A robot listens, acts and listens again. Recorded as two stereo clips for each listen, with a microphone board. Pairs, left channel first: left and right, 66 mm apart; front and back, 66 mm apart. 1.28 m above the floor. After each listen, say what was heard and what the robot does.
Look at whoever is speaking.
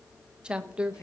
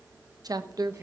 The woman speaking: 165° right. Turn 165° right.
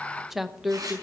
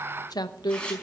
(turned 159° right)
Found it: a woman speaking, straight ahead, 1 to 2 m away.